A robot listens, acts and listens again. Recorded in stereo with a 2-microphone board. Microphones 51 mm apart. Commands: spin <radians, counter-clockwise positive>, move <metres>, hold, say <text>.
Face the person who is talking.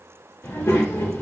spin 1.13
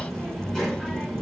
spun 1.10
spin 0.26
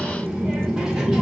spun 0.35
say Facing the child speaking.